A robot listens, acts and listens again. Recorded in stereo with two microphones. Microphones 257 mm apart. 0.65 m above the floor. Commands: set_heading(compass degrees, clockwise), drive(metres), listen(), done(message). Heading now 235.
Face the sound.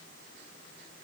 listen()
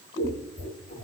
set_heading(195)
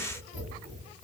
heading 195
done("Found it: scissors, straight ahead, 1 to 2 m away.")